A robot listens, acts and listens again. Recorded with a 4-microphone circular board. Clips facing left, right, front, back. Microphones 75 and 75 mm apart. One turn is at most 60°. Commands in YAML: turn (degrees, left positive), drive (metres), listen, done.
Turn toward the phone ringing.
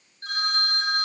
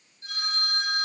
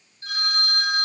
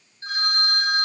turn: 60
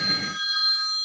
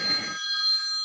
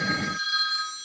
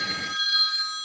turn: 60
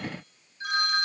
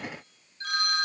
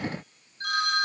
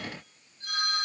turn: 15
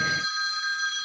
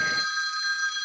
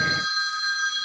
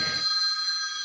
done: "Found it: a phone ringing, straight ahead, over 4 m away."